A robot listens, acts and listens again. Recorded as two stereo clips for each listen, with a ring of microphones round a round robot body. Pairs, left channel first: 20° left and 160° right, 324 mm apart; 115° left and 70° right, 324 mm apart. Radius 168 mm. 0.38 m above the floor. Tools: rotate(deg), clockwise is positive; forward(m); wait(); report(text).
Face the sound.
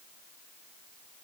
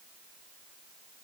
wait()
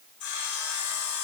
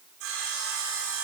rotate(15)
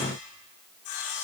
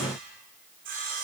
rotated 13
report("Found it: sawing, straight ahead, over 4 m away.")